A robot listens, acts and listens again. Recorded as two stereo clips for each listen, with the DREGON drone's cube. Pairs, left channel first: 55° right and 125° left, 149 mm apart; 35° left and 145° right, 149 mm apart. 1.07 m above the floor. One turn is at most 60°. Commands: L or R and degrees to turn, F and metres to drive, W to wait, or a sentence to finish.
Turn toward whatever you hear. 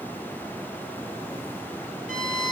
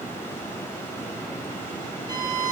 L60
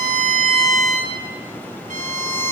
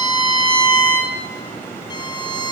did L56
L60
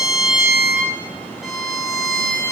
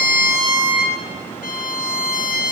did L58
L35
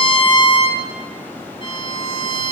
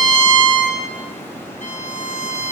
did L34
Facing the violin.